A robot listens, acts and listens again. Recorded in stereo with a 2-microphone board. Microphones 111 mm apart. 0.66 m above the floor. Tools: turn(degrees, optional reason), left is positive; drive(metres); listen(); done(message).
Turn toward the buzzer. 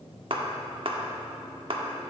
listen()
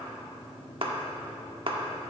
listen()
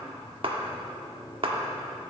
done("I can't make out a buzzer, only a clap.")